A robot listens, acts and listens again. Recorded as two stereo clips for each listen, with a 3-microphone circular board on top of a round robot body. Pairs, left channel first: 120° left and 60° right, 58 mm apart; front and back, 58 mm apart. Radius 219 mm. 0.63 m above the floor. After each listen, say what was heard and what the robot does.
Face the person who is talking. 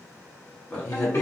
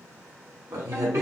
The man speaking: 165° right. Turn 165° right.
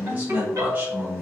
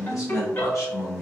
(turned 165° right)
Found it: a man speaking, straight ahead.